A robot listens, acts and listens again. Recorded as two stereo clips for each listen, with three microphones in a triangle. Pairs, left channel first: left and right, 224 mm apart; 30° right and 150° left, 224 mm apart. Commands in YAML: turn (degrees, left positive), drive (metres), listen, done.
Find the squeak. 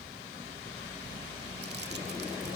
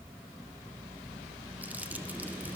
listen: true
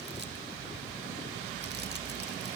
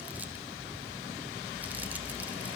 listen: true
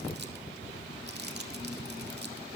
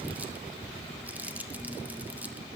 done: "I can't make out a squeak to turn to."